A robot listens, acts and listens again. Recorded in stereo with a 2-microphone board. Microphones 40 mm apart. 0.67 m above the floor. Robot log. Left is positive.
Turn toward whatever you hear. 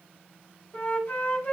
note: The flute: about 50° left or 130° left.
cmd yaw +50
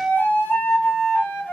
note: So it is at 75° left.
cmd yaw +75
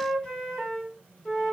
note: The flute is now 25° left.
cmd yaw +25
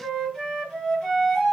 note: The flute is now 15° left.
cmd yaw +15
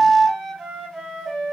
end: Facing the flute.